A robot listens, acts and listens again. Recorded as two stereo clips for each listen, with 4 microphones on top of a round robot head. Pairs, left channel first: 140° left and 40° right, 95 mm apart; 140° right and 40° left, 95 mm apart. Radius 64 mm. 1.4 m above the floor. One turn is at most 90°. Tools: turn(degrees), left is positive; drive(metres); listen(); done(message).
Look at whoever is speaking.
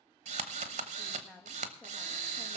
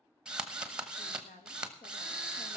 turn(degrees=-90)
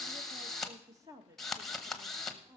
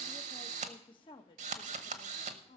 turn(degrees=-90)
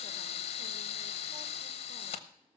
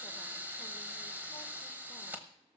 turn(degrees=-30)
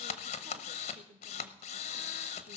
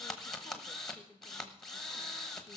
turn(degrees=-50)
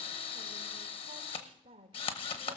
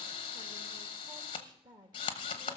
done("Facing the woman speaking, 2 to 4 m away.")